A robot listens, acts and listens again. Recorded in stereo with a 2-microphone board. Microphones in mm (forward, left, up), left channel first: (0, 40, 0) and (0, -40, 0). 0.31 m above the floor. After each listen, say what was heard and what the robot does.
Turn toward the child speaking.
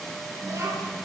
The child speaking: about 35° right or 145° right. Turn 35° right.
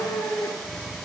Keep listening.
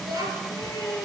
So it is at 125° right. Turn 125° right.
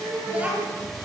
The child speaking is now 15° right. Turn 15° right.
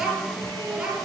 The child speaking is now 10° right. Turn 10° right.
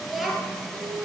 Found it: a child speaking, straight ahead.